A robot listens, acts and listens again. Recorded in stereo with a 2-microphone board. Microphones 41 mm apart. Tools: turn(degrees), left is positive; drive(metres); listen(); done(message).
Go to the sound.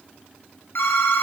turn(degrees=65)
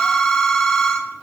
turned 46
turn(degrees=25)
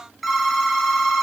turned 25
drive(metres=1.0)
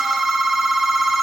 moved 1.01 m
drive(metres=1.0)
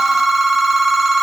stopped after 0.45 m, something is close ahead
done("I am next to the phone ringing.")